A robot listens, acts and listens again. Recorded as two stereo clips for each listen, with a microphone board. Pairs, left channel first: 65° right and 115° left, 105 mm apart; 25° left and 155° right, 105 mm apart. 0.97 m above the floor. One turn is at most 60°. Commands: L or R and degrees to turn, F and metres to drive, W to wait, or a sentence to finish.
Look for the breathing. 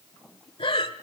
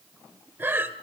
R60
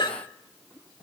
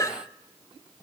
R30
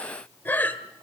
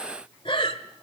Found it: breathing, straight ahead, 1 to 2 m away.